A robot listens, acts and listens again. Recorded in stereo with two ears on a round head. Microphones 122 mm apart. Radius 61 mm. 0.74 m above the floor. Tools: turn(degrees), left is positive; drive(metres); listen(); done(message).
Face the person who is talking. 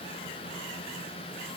listen()
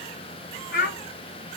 turn(degrees=65)
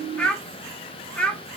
turn(degrees=10)
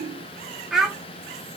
done("Facing the child speaking.")